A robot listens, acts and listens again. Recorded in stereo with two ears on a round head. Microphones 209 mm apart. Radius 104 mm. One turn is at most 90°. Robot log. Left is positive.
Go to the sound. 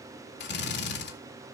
note: The drill: about 50° left or 130° left.
cmd yaw +50
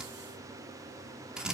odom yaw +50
cmd fwd 1.0
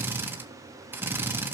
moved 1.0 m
note: The drill is now 10° right.
cmd yaw -10
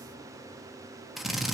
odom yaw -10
cmd fwd 1.0
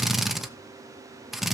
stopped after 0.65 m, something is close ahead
end: Arrived at the drill, straight ahead.